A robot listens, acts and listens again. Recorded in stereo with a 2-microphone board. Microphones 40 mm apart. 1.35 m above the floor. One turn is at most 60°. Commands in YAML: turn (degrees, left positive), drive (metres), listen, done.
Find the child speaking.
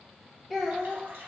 turn: 30
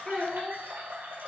turn: 60
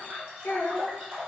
turn: 60
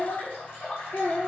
turn: 60
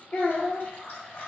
turn: 60
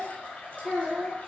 turn: 10
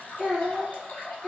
done: "Facing the child speaking."